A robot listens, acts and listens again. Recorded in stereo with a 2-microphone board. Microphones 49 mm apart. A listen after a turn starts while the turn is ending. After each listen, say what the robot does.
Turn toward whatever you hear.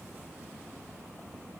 Keep listening.
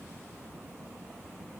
Keep listening.
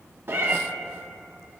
Turn 45° right.
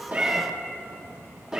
Turn 10° right.
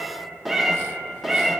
Found it: a cat meowing, straight ahead.